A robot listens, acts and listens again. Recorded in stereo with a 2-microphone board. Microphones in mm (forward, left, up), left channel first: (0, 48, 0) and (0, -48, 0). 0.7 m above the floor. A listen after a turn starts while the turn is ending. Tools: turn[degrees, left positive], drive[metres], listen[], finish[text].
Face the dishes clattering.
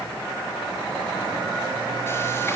Action: listen[]
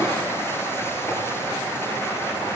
Action: listen[]
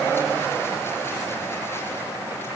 Action: finish[I can't make out dishes clattering to turn to.]